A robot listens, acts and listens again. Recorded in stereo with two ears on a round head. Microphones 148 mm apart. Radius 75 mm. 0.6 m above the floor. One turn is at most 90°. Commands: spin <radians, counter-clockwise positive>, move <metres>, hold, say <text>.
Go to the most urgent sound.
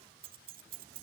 hold
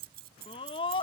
spin 0.52
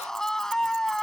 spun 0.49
move 1.0
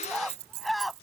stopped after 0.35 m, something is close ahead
say Blocked. The scream is further on, straight ahead.